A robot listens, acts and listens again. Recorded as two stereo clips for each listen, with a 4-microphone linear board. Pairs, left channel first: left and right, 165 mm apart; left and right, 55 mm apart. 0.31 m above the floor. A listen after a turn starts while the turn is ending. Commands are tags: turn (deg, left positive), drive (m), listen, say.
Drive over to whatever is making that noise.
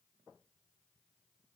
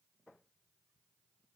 <listen/>
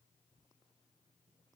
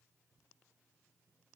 <listen/>
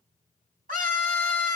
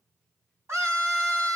<turn deg="-60"/>
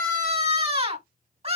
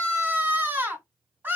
<turn deg="-45"/>
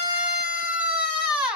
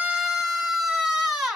<drive m="1.0"/>
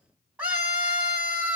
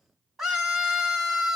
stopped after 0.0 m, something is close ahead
<turn deg="-10"/>
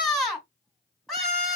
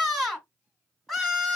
<say>Blocked. The scream is further on, straight ahead.</say>